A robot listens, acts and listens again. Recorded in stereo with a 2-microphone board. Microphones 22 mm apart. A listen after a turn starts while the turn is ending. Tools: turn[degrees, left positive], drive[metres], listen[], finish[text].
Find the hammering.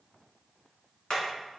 Thought: The hammering: about 45° left or 135° left.
Action: turn[45]
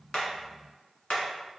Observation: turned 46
Thought: So it is at 90° left.
Action: turn[90]
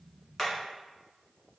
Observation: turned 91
Action: listen[]
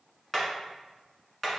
Action: finish[Found it: hammering, straight ahead, 1 to 2 m away.]